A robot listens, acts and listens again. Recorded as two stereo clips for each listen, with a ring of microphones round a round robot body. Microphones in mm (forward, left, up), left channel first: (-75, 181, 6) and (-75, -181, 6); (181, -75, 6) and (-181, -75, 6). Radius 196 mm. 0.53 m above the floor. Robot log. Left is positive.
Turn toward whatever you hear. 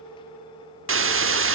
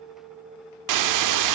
note: The hiss: 145° right.
cmd yaw -145
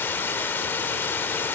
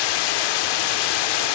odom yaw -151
end: Facing the hiss.